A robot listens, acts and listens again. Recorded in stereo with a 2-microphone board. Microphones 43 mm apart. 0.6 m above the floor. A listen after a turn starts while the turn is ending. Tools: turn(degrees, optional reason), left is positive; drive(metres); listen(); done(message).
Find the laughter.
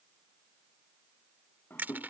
turn(degrees=55, reason="The laughter: about 55° left or 125° left.")
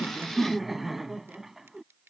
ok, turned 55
turn(degrees=-10, reason="So it is at 10° right.")
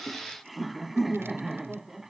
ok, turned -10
turn(degrees=-10, reason="The laughter is now 10° right.")
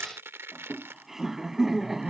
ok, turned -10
turn(degrees=-10, reason="The laughter is now 10° right.")
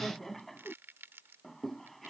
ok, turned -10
done("Found it: laughter, straight ahead.")